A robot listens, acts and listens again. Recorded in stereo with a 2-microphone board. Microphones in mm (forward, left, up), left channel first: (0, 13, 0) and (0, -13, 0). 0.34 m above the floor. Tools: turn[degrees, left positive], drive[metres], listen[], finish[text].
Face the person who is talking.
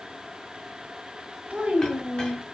Thought: The child speaking: about 65° right or 115° right.
Action: turn[-65]
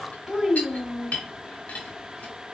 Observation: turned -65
Thought: So it is at 30° right.
Action: turn[-30]
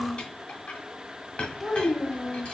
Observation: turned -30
Action: finish[Found it: a child speaking, straight ahead, 1 to 2 m away.]